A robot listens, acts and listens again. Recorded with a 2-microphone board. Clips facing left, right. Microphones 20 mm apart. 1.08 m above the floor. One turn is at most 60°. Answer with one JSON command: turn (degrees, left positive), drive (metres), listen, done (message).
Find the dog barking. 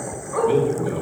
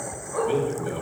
{"turn": 35}
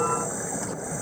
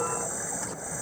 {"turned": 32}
{"listen": true}
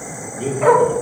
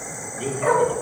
{"turn": 60}
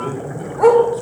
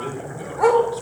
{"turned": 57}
{"turn": -10}
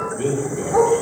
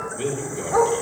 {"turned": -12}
{"turn": -25}
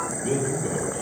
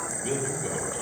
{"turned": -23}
{"listen": true}
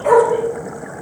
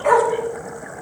{"turn": -10}
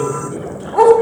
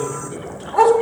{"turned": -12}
{"done": "Found it: a dog barking, straight ahead, 1 to 2 m away."}